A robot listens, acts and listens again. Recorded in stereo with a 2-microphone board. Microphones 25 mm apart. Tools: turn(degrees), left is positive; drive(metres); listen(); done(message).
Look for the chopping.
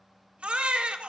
listen()
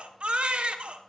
listen()
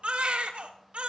done("I can't make out chopping, only a baby crying.")